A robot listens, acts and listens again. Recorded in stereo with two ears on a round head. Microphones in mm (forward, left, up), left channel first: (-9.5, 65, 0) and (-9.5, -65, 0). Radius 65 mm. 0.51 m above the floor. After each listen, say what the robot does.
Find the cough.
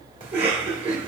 Turn 50° right.
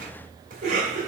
Turn 70° right.
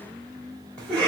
Turn 10° left.
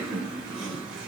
Facing the cough, 1 to 2 m away.